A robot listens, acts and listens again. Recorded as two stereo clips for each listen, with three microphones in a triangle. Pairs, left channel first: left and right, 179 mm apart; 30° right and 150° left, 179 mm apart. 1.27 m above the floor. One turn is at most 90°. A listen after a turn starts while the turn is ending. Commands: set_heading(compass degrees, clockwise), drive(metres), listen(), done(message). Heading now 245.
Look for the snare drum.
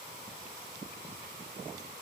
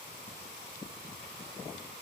listen()
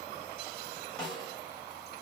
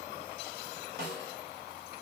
set_heading(155)
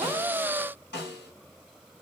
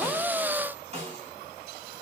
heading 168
set_heading(78)
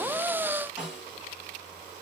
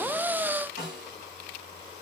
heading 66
done("Found it: a snare drum, straight ahead.")